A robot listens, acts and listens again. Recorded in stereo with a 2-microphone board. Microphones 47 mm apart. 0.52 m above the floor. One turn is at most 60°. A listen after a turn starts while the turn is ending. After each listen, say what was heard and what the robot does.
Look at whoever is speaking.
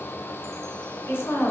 The woman speaking: about 60° left or 120° left. Turn 60° left.
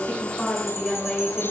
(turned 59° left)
So it is at 20° left. Turn 20° left.
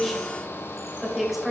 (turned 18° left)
Facing the woman speaking.